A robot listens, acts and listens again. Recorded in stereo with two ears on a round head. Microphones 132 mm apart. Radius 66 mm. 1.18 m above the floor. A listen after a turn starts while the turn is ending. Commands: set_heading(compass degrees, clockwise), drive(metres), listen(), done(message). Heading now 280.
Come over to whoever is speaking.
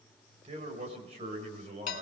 set_heading(330)
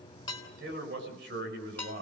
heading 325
set_heading(55)
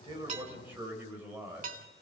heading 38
set_heading(53)
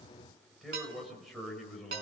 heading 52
drive(1.0)
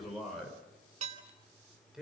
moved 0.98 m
drive(1.0)
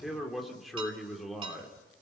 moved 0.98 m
drive(1.0)
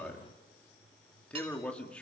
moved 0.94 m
set_heading(42)
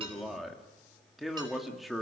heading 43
drive(1.0)
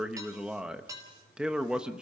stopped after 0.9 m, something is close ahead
done("I am next to the man speaking.")